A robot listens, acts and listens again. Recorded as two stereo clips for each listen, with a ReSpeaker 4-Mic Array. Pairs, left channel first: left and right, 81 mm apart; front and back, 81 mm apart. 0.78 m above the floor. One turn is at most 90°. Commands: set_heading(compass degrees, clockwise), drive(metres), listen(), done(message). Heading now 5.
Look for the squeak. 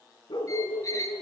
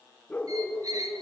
set_heading(275)
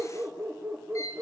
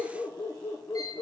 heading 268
set_heading(228)
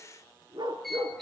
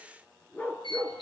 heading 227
done("Found it: a squeak, straight ahead, over 4 m away.")